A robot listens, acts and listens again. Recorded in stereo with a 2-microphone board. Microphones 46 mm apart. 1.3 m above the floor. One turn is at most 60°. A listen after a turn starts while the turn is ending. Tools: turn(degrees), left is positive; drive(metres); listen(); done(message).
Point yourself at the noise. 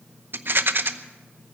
turn(degrees=-55)
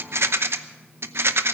turn(degrees=-60)
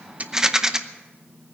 turn(degrees=-15)
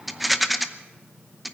done("Found it: a rattle, straight ahead, under 1 m away.")